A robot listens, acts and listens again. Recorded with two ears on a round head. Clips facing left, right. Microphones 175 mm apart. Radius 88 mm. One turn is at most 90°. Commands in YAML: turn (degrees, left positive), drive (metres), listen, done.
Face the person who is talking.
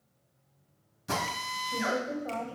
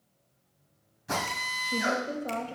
turn: -35
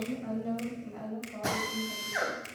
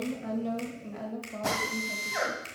turn: -90
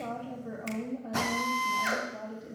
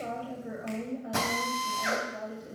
turn: -15
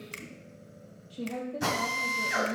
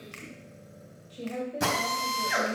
done: "Facing the woman speaking, 2 to 4 m away."